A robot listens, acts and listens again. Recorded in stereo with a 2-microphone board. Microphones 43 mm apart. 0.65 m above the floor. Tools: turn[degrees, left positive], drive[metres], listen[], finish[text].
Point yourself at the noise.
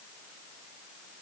Action: listen[]
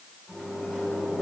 Action: turn[30]
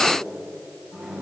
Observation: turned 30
Thought: So it is at 30° right.
Action: turn[-30]
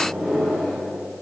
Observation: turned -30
Thought: The microwave is now 10° right.
Action: turn[-10]
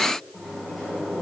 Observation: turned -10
Action: finish[Found it: a microwave, straight ahead.]